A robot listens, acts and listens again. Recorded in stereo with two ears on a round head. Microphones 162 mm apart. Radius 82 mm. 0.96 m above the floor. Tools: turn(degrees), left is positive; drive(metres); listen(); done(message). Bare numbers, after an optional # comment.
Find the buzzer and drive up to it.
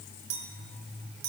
listen()
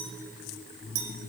listen()
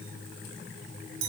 done("I can't make out a buzzer, only a clink.")